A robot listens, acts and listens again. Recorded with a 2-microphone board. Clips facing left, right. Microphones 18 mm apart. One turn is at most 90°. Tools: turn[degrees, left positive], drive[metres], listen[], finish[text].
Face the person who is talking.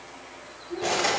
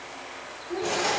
Thought: The child speaking: about 55° right or 125° right.
Action: turn[-55]
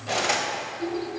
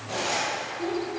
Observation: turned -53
Thought: So it is at 60° right.
Action: turn[-60]
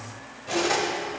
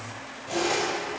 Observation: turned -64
Action: listen[]
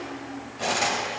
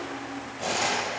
Action: finish[Found it: a child speaking, straight ahead, 1 to 2 m away.]